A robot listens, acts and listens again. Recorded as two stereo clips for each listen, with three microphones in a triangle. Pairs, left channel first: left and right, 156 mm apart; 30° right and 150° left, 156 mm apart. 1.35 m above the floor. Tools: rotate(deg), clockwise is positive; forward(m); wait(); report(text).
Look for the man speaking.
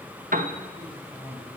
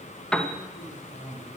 rotate(30)
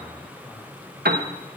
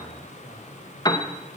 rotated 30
wait()
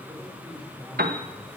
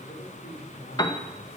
wait()
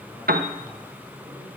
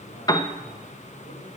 report("Facing where the man speaking came from. I can't hear it now.")